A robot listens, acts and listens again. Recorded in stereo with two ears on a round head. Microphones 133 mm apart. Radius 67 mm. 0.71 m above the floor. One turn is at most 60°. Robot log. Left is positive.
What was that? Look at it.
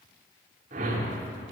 note: The whoosh: about 55° right or 125° right.
cmd yaw -55
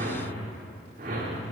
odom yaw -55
note: So it is at 65° right.
cmd yaw -60
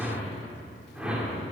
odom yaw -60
end: Found it: a whoosh, straight ahead.